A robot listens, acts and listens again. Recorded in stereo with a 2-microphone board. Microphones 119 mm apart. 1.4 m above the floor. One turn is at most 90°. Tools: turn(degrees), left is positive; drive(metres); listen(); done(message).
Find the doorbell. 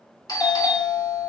turn(degrees=35)
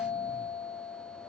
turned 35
turn(degrees=90)
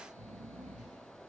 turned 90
turn(degrees=15)
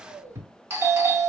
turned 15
turn(degrees=-25)
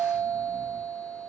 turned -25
turn(degrees=-15)
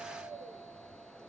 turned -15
listen()
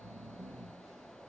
listen()
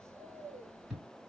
done("Facing the doorbell.")